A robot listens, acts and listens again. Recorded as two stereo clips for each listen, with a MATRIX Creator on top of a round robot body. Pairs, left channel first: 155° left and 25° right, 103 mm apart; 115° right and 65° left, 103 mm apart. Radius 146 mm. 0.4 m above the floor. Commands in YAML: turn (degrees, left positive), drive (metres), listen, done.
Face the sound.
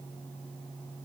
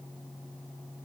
listen: true
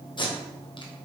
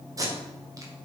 turn: 120
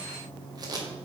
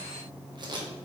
turn: 25
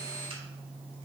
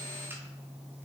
listen: true
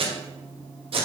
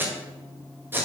done: "Facing the tape being pulled, 1 to 2 m away."